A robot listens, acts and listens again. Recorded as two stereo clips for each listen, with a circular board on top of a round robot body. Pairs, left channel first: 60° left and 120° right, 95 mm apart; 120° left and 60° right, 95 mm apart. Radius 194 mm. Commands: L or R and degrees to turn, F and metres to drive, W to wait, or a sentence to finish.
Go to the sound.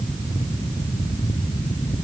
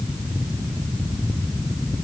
W
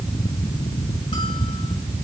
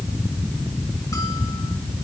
W
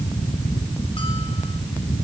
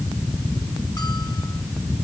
I can't make out anything to turn to.